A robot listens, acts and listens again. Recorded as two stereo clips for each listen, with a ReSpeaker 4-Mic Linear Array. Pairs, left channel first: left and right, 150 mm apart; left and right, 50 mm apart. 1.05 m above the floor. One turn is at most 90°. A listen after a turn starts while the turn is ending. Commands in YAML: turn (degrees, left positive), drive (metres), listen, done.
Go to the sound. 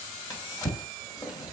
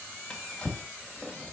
turn: 25
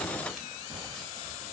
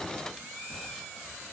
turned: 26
listen: true
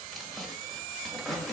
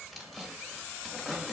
drive: 1.0
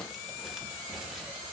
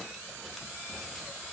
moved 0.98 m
listen: true
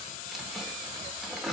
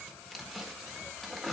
drive: 1.0
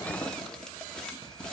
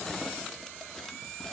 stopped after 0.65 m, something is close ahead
listen: true
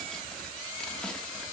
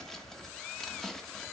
done: "I am next to the drawer."